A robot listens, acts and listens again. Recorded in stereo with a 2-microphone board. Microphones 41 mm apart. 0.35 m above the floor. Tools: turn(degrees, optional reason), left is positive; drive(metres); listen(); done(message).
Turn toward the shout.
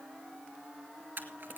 listen()
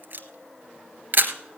listen()
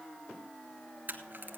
done("I can't make out a shout to turn to.")